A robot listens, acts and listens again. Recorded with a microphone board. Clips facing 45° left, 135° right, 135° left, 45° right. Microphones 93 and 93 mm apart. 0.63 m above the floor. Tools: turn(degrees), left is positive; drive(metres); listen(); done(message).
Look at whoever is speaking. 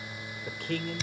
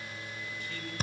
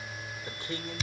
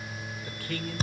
turn(degrees=70)
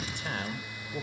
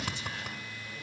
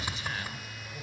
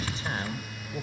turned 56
turn(degrees=10)
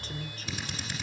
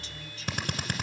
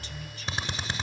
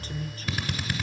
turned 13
listen()
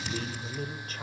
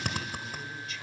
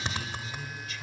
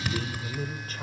done("Facing the man speaking.")